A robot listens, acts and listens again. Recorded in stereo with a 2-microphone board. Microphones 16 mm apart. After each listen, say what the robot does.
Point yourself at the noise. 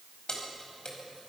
Turn 50° left.
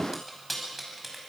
Found it: keys jangling, straight ahead.